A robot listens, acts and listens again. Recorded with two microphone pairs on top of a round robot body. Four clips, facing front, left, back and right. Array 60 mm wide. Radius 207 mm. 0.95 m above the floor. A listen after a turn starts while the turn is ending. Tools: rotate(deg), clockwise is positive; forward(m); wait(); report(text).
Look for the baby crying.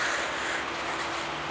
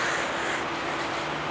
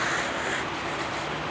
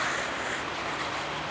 wait()
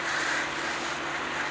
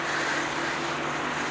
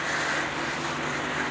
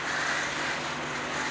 wait()
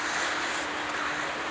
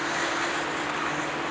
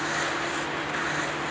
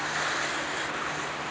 report("I can't make out a baby crying to turn to.")